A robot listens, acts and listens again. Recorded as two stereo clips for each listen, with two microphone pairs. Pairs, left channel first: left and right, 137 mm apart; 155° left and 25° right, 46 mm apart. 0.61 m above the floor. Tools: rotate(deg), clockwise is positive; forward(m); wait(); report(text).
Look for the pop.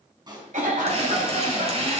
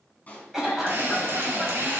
rotate(145)
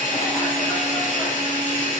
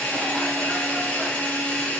report("I heard a pop from this way, but can't make it out now.")